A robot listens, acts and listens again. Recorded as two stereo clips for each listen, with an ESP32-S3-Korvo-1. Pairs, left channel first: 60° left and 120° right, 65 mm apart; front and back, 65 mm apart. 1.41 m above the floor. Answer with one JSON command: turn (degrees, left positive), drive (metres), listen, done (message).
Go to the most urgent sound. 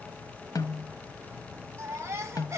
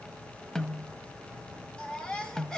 {"turn": -75}
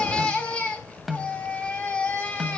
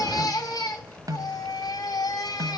{"turn": -10}
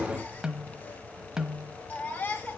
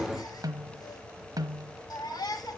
{"drive": 1.0}
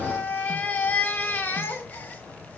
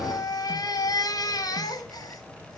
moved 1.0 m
{"drive": 1.0}
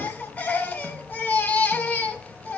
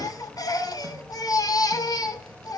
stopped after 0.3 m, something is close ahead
{"done": "Blocked. The baby crying is further on, straight ahead."}